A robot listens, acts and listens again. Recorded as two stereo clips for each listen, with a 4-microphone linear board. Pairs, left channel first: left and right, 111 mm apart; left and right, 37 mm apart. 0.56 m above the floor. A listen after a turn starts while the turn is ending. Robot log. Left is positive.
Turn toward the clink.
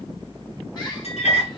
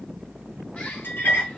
note: The clink: about 75° left or 105° left.
cmd yaw +75
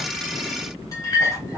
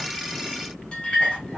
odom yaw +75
note: So it is at 30° left.
cmd yaw +30
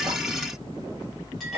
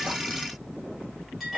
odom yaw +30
end: Found it: a clink, straight ahead, 1 to 2 m away.